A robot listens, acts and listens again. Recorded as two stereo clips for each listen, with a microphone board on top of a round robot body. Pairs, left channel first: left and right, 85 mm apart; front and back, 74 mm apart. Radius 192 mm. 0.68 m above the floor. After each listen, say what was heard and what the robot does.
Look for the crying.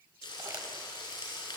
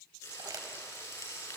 Keep listening.
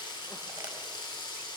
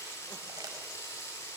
Keep listening.
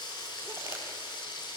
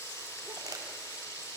I can't make out crying to turn to.